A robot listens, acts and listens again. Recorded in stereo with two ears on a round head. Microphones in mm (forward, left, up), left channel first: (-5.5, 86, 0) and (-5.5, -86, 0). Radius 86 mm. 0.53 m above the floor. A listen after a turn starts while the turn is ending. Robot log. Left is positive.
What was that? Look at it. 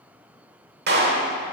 note: The clap: about 55° right or 125° right.
cmd yaw -55
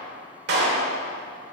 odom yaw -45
note: So it is at 70° right.
cmd yaw -70
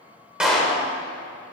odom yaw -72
end: Facing the clap, 1 to 2 m away.